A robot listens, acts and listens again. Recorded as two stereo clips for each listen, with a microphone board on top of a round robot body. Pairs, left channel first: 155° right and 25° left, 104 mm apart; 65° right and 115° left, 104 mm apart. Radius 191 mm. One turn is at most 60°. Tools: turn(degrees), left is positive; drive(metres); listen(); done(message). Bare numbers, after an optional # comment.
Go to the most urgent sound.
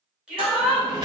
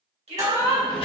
# The shout: 105° left.
turn(60)
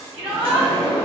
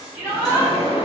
# The shout is now 40° left.
turn(40)
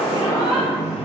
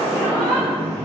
listen()
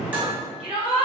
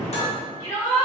drive(1.0)
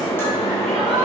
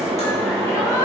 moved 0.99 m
listen()
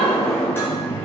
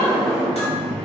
listen()
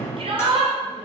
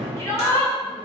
drive(1.0)
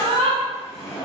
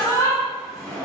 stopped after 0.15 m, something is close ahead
done("Arrived at the shout, straight ahead.")